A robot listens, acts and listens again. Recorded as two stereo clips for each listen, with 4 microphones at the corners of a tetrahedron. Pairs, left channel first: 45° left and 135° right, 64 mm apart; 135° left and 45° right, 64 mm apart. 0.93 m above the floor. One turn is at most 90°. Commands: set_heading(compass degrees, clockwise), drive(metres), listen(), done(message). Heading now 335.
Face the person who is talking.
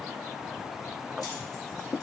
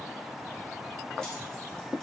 listen()
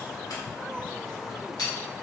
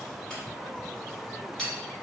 listen()
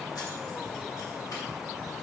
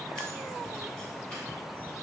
done("I can't make out anyone speaking, only keys jangling.")